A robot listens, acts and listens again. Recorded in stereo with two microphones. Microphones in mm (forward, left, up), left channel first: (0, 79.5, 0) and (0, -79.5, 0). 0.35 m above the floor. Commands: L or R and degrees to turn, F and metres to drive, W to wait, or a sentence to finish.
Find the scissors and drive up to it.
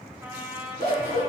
R75
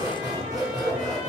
R25
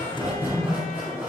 R10
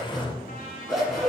F1.0
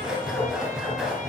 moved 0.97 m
F1.0
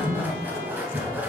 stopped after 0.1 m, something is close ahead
R10
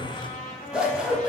I am next to the scissors.